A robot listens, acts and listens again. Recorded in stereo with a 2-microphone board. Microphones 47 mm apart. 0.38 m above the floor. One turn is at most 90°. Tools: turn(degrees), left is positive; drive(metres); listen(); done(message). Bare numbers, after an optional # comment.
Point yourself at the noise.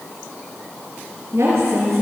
# The woman speaking: about 65° right or 115° right.
turn(-65)
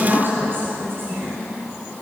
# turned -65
# So it is at 50° right.
turn(-50)
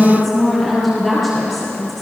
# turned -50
done("Found it: a woman speaking, straight ahead.")